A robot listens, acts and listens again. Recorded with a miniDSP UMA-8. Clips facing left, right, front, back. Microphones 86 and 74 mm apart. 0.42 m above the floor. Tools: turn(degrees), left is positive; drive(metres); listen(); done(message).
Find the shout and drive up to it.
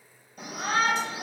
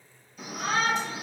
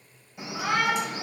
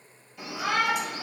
turn(degrees=65)
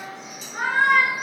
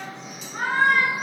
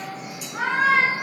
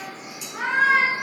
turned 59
turn(degrees=10)
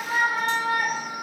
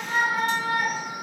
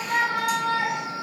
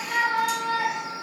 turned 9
drive(metres=1.0)
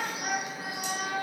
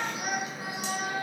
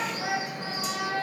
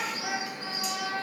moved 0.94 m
drive(metres=1.0)
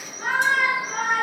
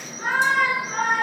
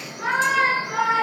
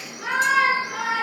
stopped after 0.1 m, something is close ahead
done("I am next to the shout.")